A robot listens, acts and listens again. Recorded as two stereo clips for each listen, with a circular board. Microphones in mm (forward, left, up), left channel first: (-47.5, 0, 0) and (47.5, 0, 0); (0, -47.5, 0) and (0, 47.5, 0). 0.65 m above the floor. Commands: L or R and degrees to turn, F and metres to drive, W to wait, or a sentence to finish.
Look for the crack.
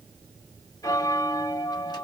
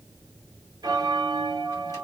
W
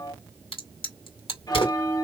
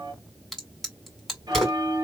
L180
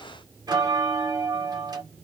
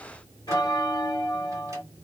I heard a crack from this way, but can't make it out now.